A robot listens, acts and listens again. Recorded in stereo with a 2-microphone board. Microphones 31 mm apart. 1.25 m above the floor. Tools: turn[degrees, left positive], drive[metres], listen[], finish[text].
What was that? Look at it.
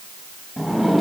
Action: turn[30]
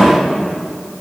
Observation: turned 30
Thought: So it is at 150° left.
Action: turn[150]
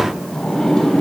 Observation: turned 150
Thought: The sliding door is now 20° left.
Action: turn[20]
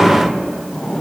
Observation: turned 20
Thought: The sliding door is now 10° left.
Action: turn[10]
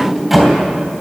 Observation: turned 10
Action: finish[Facing the sliding door, 2 to 4 m away.]